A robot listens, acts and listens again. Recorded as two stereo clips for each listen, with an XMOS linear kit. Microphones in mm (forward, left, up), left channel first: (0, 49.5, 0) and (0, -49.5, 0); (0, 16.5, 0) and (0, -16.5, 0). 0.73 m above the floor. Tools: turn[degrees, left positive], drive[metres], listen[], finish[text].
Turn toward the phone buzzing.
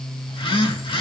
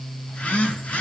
Thought: The phone buzzing: about 60° left or 120° left.
Action: turn[60]
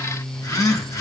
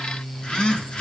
Thought: So it is at 40° left.
Action: turn[40]
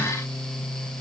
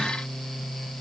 Action: listen[]
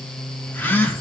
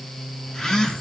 Thought: The phone buzzing is now 20° left.
Action: turn[20]
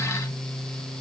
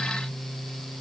Action: listen[]
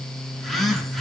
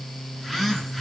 Action: finish[Facing the phone buzzing.]